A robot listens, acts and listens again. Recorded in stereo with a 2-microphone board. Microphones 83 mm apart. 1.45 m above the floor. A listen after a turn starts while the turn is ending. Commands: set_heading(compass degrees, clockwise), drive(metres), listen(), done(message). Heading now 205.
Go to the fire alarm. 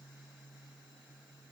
listen()
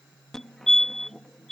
set_heading(175)
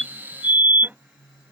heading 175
set_heading(200)
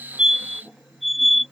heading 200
drive(1.0)
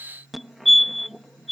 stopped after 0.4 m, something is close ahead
done("Something is in my way. I am facing the fire alarm but have not reached it.")